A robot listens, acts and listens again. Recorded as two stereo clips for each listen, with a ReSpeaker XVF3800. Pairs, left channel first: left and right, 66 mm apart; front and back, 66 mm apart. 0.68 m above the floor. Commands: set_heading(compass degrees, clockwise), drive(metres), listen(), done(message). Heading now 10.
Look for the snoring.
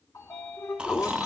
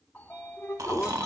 set_heading(170)
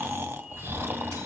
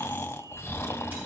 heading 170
set_heading(210)
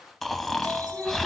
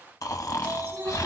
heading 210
done("Facing the snoring, under 1 m away.")